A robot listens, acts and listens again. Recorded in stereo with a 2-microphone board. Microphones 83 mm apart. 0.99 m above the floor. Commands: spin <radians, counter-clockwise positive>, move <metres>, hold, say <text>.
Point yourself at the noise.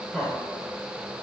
spin 0.52
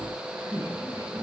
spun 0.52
spin -0.61
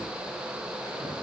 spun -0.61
hold
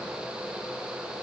hold
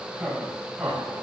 spin -0.26
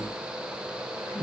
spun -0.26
say Found it: laughter, straight ahead, over 4 m away.